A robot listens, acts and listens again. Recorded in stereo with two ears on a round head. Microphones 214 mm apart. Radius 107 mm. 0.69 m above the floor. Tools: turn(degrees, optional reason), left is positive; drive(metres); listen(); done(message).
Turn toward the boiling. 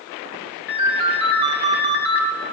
listen()
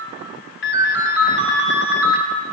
listen()
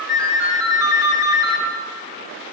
done("I can't make out boiling to turn to.")